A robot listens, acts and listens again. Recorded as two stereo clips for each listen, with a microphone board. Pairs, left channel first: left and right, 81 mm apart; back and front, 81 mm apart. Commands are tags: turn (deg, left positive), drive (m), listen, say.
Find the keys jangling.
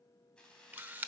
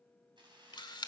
<turn deg="10"/>
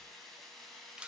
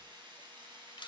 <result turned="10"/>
<say>Facing the keys jangling, 2 to 4 m away.</say>